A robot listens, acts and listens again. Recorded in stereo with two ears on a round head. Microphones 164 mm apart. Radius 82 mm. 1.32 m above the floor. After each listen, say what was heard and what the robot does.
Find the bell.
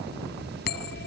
The bell: about 60° left or 120° left. Turn 60° left.
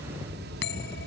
So it is at 65° left. Turn 65° left.
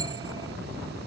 The bell is now 20° right. Turn 20° right.
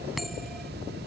Facing the bell.